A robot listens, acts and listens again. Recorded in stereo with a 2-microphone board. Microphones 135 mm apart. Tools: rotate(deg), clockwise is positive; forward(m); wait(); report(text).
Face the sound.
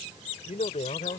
rotate(-70)
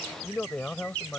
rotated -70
rotate(-10)
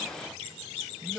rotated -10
report("Found it: a man speaking, straight ahead.")